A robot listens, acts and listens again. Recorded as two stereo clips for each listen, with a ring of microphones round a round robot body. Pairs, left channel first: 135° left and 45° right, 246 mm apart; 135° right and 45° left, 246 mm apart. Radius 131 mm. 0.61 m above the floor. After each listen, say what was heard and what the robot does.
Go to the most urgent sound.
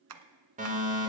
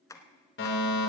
The fire alarm: 100° right. Turn 100° right.
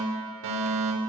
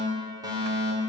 The fire alarm is now 30° right. Turn 30° right.
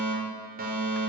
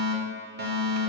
Drive 1.0 m forward.
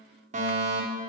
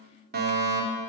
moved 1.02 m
Drive 1.0 m forward.
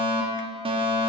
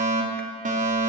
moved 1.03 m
The fire alarm is now 10° left. Turn 10° left.
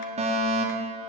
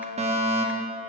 Drive 1.0 m forward.
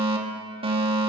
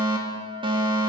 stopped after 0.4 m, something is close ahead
I am next to the fire alarm.